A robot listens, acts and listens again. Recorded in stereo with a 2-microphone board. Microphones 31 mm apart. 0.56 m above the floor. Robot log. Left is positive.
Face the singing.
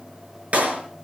cmd idle
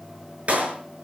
cmd idle
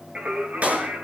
note: The singing: about 70° right or 110° right.
cmd yaw -70
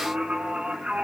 note: So it is at 35° right.
cmd yaw -35
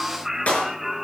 end: Facing the singing, over 4 m away.